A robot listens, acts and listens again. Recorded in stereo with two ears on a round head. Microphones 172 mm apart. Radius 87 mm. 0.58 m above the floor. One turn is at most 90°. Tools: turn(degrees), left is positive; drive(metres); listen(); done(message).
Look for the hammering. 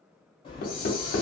turn(degrees=50)
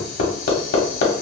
turn(degrees=65)
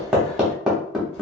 done("Found it: hammering, straight ahead, under 1 m away.")